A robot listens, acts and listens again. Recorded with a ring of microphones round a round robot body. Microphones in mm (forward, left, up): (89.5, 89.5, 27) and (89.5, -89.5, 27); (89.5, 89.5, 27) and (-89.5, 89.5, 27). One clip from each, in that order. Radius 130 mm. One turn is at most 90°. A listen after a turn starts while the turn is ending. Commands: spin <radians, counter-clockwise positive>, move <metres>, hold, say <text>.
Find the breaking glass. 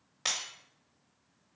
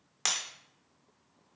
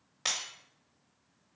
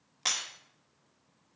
spin -1.57
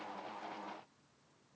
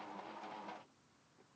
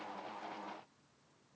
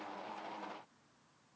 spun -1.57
say I heard breaking glass from this way, but can't make it out now.